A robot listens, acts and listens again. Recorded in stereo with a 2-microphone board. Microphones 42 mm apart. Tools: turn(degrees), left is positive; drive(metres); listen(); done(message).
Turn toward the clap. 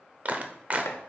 turn(degrees=-35)
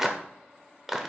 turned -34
turn(degrees=-10)
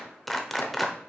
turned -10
done("Facing the clap, under 1 m away.")